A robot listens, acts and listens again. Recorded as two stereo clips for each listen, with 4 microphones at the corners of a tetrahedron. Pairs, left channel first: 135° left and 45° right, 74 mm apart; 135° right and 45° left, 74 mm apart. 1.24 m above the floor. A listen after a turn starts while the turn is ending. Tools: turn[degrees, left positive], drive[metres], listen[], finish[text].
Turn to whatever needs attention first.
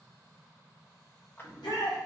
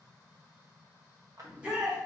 Thought: The shout: 120° left.
Action: turn[120]
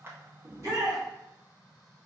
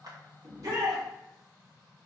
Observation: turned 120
Action: finish[Found it: a shout, straight ahead, 1 to 2 m away.]